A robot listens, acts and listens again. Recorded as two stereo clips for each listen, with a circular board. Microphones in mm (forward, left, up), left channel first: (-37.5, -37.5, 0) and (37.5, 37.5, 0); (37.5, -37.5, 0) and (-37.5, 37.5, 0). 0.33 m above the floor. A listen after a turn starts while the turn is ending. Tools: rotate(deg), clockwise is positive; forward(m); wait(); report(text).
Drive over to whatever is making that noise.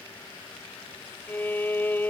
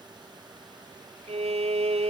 rotate(-150)
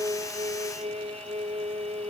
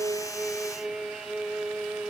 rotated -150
rotate(-50)
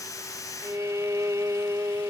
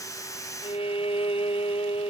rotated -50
rotate(15)
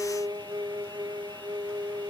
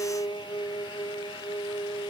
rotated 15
forward(1.0)
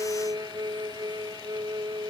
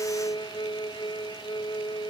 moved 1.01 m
forward(1.0)
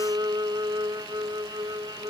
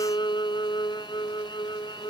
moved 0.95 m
forward(1.0)
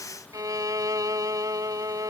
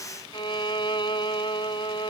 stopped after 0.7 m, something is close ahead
rotate(10)
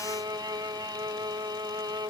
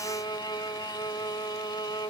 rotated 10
report("I am next to the violin.")